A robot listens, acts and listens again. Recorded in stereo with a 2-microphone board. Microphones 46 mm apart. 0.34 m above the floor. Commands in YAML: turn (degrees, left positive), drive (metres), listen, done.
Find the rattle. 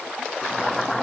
listen: true
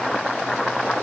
listen: true
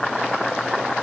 done: "I can't make out a rattle, only boiling."